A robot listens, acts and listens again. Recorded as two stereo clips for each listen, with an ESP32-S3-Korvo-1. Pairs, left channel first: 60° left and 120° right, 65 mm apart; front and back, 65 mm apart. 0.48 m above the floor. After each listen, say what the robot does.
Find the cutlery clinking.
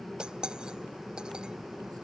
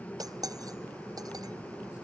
Turn 160° left.
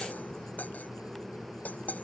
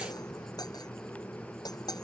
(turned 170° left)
Facing the cutlery clinking.